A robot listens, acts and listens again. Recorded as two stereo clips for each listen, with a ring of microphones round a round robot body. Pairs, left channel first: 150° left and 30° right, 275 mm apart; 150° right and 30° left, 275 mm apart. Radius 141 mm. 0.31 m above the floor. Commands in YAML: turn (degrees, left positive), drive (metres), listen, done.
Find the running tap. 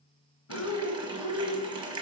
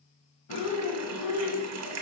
turn: 40
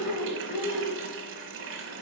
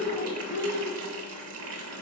done: "Facing the running tap, 1 to 2 m away."